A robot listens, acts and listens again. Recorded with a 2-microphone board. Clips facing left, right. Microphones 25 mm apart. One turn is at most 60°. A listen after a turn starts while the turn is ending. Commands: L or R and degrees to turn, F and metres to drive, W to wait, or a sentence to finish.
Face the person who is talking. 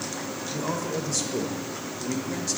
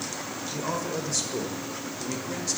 R30
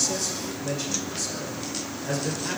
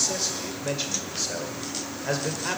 R60
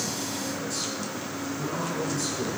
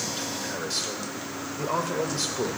R60
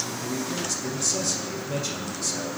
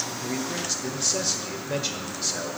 R30
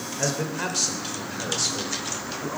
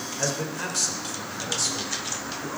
L15
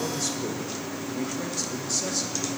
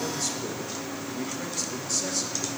W
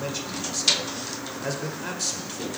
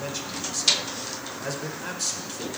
Found it: a man speaking, straight ahead.